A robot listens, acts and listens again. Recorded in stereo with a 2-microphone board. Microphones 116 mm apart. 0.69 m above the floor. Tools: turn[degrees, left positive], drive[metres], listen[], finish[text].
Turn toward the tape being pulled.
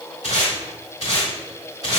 Thought: The tape being pulled: about 65° left or 115° left.
Action: turn[65]
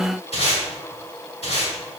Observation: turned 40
Thought: So it is at 65° left.
Action: turn[65]
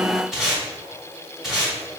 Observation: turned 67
Action: finish[Found it: tape being pulled, straight ahead.]